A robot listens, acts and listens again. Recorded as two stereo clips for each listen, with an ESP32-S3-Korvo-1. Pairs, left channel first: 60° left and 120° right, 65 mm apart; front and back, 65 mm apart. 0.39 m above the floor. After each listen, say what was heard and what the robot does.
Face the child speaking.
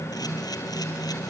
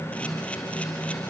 Keep listening.
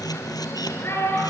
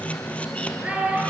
The child speaking: 110° left. Turn 110° left.
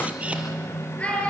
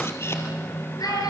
The child speaking is now 10° right. Turn 10° right.
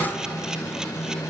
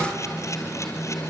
Keep listening.
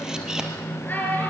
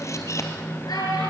Facing the child speaking, over 4 m away.